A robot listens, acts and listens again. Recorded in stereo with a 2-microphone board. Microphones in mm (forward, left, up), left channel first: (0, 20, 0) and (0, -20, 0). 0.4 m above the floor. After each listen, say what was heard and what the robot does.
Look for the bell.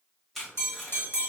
The bell: about 65° left or 115° left. Turn 65° left.
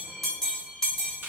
So it is at 10° left. Turn 10° left.
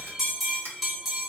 Found it: a bell, straight ahead, 1 to 2 m away.